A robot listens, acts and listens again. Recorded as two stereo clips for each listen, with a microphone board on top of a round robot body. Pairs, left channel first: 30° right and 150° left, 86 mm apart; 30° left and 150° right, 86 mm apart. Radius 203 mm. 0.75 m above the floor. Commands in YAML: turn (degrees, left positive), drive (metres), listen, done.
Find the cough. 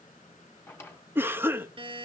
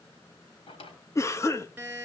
turn: 85
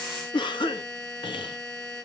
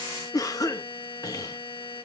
turn: -15
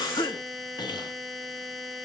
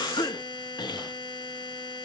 done: "Facing the cough."